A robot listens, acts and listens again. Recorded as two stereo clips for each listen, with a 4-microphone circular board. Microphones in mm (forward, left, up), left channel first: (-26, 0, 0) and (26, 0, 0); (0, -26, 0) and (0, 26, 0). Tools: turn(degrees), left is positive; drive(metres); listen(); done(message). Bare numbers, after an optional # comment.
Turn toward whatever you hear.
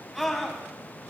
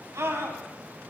# The scream: 90° left.
turn(90)
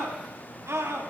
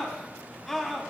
done("Facing the scream, over 4 m away.")